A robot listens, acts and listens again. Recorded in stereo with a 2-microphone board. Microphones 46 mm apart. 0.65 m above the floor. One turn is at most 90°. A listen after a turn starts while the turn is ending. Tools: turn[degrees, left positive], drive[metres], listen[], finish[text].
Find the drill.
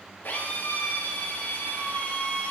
Thought: The drill: about 55° left or 125° left.
Action: turn[55]
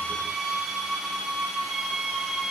Action: finish[Found it: a drill, straight ahead.]